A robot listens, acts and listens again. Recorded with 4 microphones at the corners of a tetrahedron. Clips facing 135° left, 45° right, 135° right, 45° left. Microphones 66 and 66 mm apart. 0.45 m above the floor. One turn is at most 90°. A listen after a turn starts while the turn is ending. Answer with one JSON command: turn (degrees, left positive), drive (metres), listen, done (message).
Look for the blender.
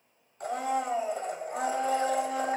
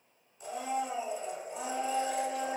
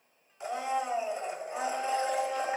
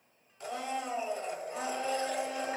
{"turn": 90}
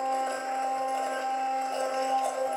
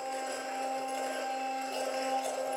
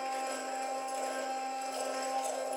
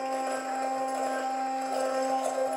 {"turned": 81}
{"turn": 70}
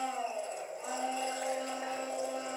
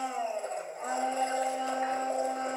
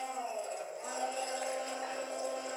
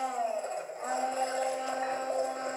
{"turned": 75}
{"done": "Found it: a blender, straight ahead, 1 to 2 m away."}